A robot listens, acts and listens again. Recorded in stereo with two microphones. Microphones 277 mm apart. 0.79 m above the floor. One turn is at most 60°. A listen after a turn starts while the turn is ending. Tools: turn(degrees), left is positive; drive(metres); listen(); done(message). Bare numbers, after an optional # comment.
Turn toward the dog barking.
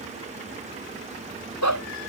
# The dog barking: about 75° left or 105° left.
turn(60)
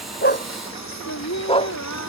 # So it is at 20° left.
turn(20)
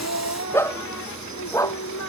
# The dog barking is now 10° left.
turn(10)
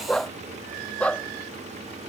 done("Facing the dog barking.")